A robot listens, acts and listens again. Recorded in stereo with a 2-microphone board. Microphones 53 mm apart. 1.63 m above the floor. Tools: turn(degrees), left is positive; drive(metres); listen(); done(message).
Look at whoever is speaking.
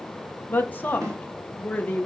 turn(degrees=30)
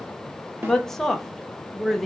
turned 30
turn(degrees=10)
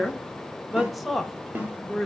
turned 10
done("Found it: a woman speaking, straight ahead, under 1 m away.")